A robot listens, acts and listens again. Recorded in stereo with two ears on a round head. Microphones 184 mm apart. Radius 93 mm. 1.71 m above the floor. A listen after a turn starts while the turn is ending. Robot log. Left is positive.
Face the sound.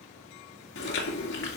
note: The chewing: about 55° left or 125° left.
cmd yaw +55
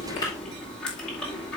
end: Facing the chewing.